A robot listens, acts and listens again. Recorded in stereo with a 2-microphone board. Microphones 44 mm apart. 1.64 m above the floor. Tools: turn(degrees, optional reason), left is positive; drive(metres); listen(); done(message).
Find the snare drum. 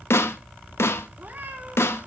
turn(degrees=90)
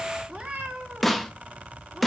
done("Found it: a snare drum, straight ahead.")